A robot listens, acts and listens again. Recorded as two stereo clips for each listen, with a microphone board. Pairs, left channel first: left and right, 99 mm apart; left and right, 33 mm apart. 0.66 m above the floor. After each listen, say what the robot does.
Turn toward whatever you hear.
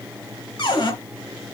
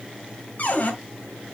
Turn 50° left.
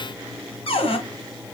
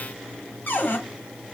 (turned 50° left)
Turn 75° left.
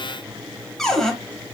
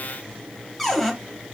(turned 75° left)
Facing the cupboard door.